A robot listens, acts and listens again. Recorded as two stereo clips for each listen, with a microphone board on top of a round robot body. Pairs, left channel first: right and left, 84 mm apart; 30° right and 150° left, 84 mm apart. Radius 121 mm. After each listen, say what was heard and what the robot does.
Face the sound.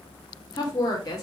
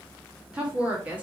The woman speaking: 135° right. Turn 135° right.
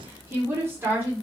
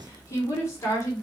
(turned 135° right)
The woman speaking is now 25° left. Turn 25° left.
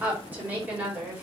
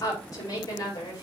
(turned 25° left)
The woman speaking is now 20° left. Turn 20° left.
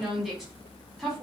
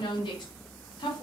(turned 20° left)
Facing the woman speaking, over 4 m away.